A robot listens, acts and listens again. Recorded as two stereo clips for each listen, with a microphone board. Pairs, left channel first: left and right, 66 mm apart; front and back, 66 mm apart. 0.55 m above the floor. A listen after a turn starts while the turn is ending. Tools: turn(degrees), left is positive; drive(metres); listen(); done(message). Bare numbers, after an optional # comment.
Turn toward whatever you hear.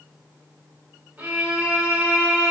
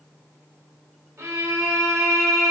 # The violin: 150° right.
turn(-150)
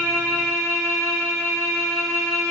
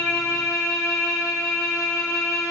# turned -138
# The violin is now 10° right.
turn(-10)
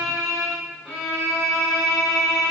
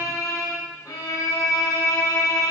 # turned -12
done("Facing the violin.")